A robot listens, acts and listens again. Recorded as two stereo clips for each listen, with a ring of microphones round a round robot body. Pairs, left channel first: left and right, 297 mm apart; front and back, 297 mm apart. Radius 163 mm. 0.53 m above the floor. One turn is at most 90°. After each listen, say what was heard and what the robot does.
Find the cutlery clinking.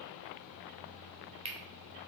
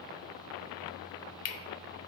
The cutlery clinking: 20° right. Turn 20° right.
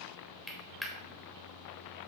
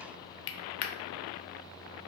Found it: cutlery clinking, straight ahead.